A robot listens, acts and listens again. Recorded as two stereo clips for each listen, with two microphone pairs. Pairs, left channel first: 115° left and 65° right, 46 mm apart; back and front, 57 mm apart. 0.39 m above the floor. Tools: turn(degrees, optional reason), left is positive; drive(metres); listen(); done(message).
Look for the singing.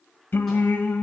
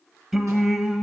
turn(degrees=80, reason="The singing: 80° left.")
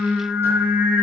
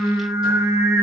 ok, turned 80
turn(degrees=-20, reason="The singing is now 20° right.")
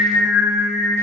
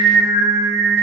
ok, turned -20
done("Found it: singing, straight ahead, under 1 m away.")